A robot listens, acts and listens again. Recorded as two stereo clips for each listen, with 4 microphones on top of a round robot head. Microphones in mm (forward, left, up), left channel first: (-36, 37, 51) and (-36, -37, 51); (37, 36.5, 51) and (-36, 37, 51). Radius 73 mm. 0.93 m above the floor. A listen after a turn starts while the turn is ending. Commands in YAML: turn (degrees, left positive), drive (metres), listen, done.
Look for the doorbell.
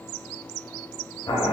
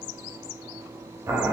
listen: true
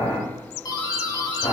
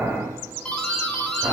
turn: 75
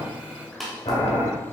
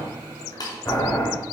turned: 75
done: "Facing the doorbell."